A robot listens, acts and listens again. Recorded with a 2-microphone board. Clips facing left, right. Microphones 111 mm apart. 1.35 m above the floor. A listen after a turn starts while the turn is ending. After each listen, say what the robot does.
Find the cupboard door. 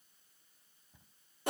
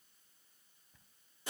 Turn 20° left.
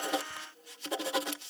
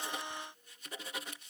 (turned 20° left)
Keep listening.
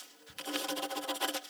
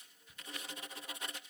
Turn 140° left.
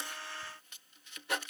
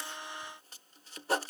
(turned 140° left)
Keep listening.
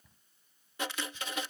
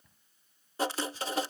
Found it: a cupboard door, straight ahead.